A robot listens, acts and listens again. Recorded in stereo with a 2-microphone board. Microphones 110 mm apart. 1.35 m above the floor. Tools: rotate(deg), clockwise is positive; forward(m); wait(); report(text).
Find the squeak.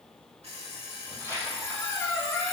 rotate(-25)
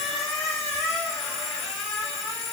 report("Facing the squeak.")